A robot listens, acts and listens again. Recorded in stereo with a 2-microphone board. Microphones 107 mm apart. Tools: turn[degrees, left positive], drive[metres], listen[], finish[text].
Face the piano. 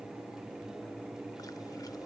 Action: listen[]
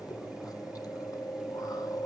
Action: listen[]
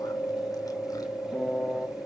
Action: turn[30]
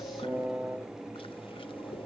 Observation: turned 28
Thought: So it is at 20° right.
Action: turn[-20]
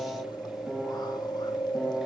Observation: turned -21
Action: finish[Found it: a piano, straight ahead, 1 to 2 m away.]